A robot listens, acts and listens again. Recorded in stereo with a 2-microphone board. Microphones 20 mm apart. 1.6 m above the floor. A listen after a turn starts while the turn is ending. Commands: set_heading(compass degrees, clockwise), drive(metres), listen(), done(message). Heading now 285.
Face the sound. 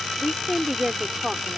set_heading(315)
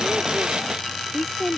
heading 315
done("Facing the woman speaking.")